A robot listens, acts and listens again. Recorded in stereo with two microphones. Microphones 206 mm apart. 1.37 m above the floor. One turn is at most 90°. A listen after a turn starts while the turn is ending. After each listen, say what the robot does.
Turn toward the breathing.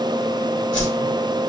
Keep listening.
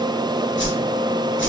Keep listening.
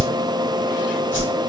I can't make out breathing, only a whoosh.